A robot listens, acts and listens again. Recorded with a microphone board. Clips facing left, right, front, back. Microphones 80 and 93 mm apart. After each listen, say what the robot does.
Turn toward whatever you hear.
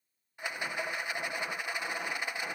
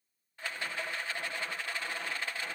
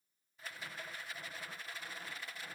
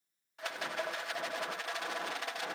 Turn 165° left.
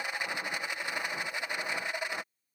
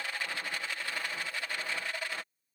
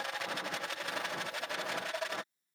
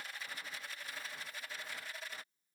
Turn 20° left.
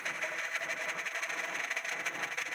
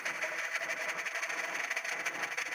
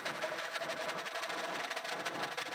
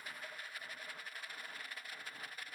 Facing the rattle.